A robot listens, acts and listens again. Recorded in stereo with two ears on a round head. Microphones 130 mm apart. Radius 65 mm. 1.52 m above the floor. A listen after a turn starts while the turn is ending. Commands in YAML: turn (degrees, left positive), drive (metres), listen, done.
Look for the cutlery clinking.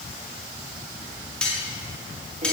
turn: 30
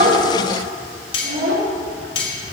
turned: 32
turn: 140
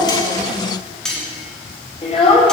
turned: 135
done: "Facing the cutlery clinking, 2 to 4 m away."